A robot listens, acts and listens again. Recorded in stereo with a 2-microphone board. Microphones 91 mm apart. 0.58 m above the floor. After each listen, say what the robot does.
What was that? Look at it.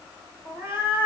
Turn 70° left.
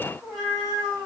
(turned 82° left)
Turn 10° left.
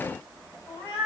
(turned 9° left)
Facing the cat meowing.